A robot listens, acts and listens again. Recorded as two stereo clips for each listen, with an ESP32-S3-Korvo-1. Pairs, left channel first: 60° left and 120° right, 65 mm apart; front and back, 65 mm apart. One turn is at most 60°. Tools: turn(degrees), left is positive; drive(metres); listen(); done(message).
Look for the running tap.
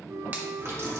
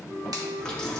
turn(degrees=-60)
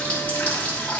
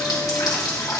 done("Found it: a running tap, straight ahead, 1 to 2 m away.")